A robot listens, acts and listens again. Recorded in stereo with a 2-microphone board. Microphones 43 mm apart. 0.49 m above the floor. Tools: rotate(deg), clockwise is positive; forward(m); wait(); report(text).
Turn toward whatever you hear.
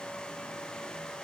wait()
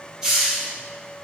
rotate(15)
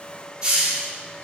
rotate(150)
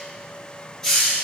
rotate(-15)
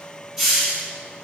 report("Found it: a hiss, straight ahead.")